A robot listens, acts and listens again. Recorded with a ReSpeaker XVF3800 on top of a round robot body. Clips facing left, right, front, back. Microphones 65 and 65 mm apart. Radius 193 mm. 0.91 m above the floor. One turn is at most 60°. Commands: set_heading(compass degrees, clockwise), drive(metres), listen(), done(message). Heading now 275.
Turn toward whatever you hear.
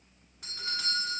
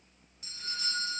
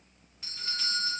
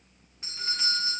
set_heading(215)
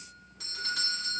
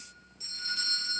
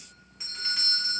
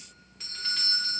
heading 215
set_heading(155)
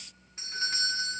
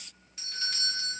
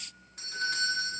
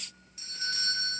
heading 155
set_heading(120)
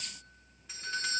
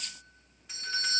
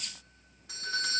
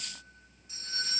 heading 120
done("Facing the doorbell.")